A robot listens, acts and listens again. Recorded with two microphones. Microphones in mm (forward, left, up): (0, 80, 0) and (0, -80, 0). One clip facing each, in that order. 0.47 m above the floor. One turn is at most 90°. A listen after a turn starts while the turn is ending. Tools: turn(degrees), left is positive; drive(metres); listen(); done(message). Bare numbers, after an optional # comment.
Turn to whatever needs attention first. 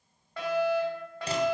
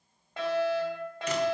# The fire alarm: about 20° right or 160° right.
turn(-20)
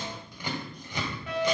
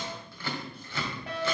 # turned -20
# So it is at 135° right.
turn(-90)
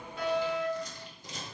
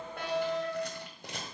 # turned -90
# The fire alarm is now 40° right.
turn(-40)
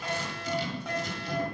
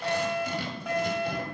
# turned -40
done("Found it: a fire alarm, straight ahead, over 4 m away.")